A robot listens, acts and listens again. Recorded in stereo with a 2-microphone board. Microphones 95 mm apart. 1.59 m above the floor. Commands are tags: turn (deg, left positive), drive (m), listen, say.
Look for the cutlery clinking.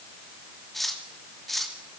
<turn deg="30"/>
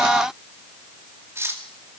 <turn deg="-30"/>
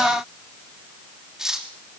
<say>Facing the cutlery clinking.</say>